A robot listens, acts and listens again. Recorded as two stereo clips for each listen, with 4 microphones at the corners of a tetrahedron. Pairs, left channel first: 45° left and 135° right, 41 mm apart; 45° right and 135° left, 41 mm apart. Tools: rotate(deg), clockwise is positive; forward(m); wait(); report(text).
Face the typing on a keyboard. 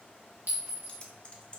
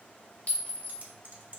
rotate(-105)
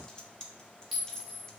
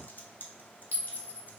rotate(20)
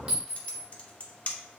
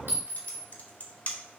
report("Found it: typing on a keyboard, straight ahead, under 1 m away.")